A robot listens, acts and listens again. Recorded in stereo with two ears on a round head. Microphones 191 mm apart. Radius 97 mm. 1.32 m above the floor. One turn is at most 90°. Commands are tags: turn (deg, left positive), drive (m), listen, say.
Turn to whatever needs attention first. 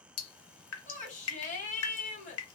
<turn deg="35"/>
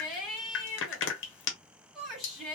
<say>Found it: a shout, straight ahead.</say>